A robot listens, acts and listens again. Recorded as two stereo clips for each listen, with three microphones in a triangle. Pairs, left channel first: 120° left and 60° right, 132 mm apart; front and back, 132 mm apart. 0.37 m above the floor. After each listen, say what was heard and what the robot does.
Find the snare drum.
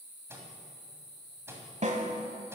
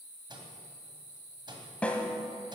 The snare drum: 80° right. Turn 80° right.
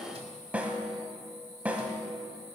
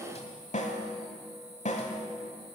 The snare drum is now 20° left. Turn 20° left.
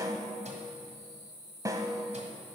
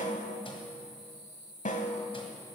Facing the snare drum, 1 to 2 m away.